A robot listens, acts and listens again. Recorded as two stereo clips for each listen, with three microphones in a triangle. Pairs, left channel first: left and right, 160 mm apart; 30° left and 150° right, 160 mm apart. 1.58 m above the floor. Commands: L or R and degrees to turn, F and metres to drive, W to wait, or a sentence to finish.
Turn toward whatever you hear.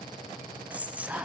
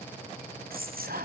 R170
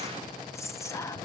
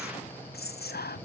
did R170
L20
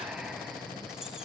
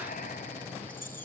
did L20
W
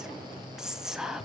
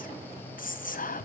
Facing the whispering.